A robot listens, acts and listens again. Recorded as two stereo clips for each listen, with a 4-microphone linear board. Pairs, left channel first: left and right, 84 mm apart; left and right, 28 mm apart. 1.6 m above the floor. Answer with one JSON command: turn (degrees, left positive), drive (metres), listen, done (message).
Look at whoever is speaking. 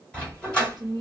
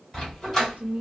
{"turn": -50}
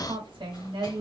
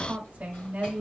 {"turn": -75}
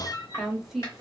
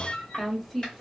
{"done": "Facing the woman speaking, 1 to 2 m away."}